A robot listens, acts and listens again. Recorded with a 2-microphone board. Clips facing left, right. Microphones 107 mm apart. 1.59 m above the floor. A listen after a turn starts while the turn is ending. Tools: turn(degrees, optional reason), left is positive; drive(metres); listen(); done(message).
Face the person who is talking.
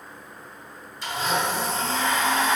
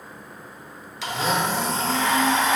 listen()
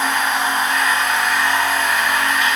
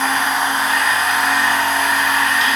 listen()
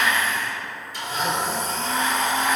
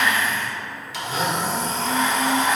done("I can't make out anyone speaking, only a blender.")